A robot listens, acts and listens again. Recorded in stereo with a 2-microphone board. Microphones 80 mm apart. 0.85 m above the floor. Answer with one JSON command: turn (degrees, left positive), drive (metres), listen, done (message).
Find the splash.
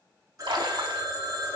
{"turn": -90}
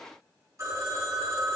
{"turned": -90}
{"done": "I heard a splash from this way, but can't make it out now."}